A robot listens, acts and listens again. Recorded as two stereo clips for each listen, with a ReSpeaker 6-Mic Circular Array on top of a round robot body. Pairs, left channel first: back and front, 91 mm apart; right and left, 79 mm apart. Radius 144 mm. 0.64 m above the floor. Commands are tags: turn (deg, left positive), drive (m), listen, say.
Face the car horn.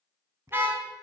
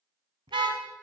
<turn deg="70"/>
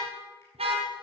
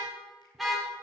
<say>Found it: a car horn, straight ahead.</say>